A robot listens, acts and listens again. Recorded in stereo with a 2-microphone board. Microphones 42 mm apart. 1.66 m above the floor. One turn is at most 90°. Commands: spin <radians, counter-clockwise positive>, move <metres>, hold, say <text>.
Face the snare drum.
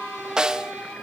spin -0.35
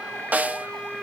spin -1.57
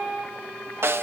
spin -1.13
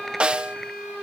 spin -0.44
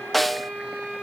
say Facing the snare drum.